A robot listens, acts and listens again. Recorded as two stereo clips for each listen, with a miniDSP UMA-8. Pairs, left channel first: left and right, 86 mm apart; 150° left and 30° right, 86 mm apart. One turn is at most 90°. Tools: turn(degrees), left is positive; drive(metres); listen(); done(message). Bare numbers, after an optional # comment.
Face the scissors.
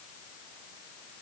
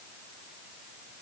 listen()
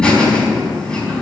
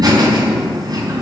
listen()
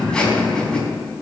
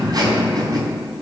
done("I can't make out scissors to turn to.")